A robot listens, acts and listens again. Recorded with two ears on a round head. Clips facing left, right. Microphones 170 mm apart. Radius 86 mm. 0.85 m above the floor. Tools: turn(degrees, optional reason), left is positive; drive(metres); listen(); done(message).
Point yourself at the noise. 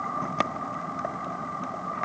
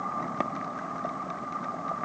listen()
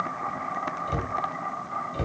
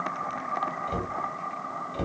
turn(degrees=30)
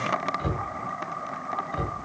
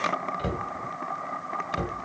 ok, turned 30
turn(degrees=-30, reason="So it is at 30° right.")
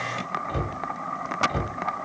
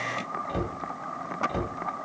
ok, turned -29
done("Found it: a cupboard door, straight ahead.")